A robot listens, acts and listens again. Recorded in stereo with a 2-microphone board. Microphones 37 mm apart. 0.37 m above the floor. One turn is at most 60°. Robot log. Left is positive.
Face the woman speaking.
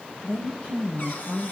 note: The woman speaking: about 35° left or 145° left.
cmd yaw +35
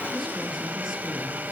end: Found it: a woman speaking, straight ahead.